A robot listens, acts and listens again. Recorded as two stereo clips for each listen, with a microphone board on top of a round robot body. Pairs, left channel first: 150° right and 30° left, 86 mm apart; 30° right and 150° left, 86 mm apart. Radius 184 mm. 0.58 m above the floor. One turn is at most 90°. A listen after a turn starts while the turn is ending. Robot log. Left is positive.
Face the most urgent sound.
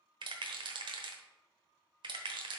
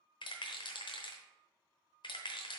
cmd idle
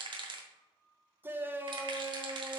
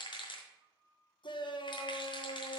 note: The shout: 35° right.
cmd yaw -35
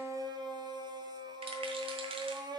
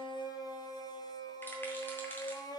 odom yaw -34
end: Found it: a shout, straight ahead, 1 to 2 m away.